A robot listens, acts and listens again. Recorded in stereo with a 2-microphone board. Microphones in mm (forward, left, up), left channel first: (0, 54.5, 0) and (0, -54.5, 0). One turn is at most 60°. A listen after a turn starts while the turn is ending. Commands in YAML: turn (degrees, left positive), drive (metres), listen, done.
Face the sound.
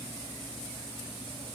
listen: true
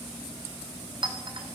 turn: -50
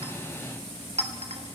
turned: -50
turn: -60
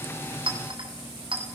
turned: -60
turn: -55
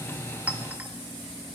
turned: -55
listen: true
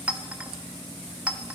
turn: -15
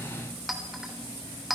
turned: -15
done: "Facing the clink, 2 to 4 m away."